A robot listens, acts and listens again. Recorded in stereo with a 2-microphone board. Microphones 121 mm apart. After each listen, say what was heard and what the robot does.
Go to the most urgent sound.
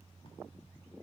Keep listening.
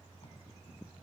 Keep listening.
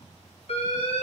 The alarm: about 60° left or 120° left. Turn 60° left.
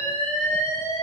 So it is at 20° left. Turn 20° left.
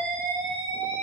Drive 1.0 m forward.
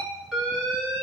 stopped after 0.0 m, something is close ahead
Blocked. The alarm is further on, straight ahead.